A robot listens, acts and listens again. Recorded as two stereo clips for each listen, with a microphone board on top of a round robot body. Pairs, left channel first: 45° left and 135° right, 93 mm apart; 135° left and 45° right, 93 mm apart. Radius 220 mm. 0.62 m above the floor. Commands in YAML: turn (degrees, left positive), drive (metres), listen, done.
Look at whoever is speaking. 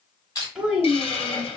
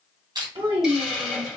turn: -55
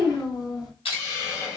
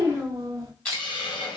done: "Facing the child speaking."